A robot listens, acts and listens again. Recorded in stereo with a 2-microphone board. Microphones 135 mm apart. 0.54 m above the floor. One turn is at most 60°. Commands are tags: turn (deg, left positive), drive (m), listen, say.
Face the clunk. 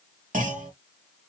<turn deg="-60"/>
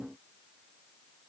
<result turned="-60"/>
<listen/>
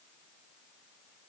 <say>I heard a clunk, but can't make it out now. It was about 15° right or 45° right.</say>